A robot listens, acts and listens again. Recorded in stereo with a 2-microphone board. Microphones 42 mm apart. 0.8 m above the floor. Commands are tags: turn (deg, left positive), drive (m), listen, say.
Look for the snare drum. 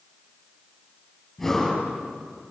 <listen/>
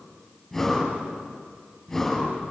<listen/>
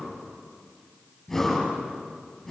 <say>I can't make out a snare drum, only breathing.</say>